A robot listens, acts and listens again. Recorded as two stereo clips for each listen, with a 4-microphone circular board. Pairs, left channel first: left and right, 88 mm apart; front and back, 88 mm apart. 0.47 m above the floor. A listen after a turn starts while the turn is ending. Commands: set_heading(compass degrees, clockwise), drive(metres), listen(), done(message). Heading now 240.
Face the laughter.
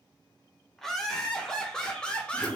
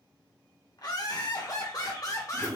set_heading(220)
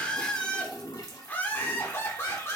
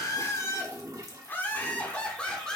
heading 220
set_heading(145)
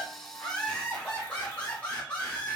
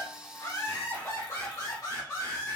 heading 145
set_heading(120)
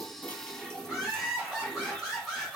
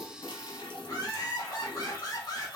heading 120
set_heading(130)
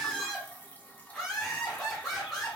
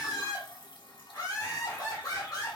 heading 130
done("Found it: laughter, straight ahead.")